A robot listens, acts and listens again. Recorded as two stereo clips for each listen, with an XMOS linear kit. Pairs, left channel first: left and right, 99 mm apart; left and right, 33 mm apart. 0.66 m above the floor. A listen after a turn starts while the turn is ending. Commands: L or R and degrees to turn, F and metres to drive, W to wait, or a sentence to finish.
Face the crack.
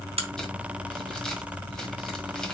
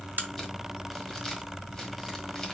R90
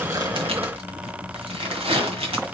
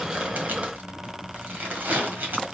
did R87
I heard a crack from this way, but can't make it out now.